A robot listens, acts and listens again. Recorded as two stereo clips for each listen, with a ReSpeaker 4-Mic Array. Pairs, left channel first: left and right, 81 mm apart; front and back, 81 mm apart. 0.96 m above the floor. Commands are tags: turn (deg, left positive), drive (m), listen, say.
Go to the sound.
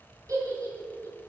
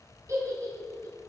<turn deg="-135"/>
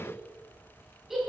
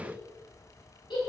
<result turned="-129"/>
<drive m="1.0"/>
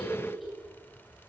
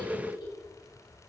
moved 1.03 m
<drive m="1.0"/>
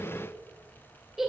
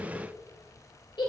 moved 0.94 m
<drive m="1.0"/>
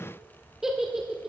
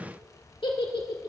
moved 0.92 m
<drive m="1.0"/>
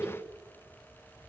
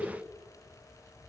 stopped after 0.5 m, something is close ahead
<turn deg="-10"/>
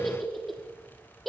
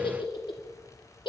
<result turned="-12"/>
<say>I am next to the giggle.</say>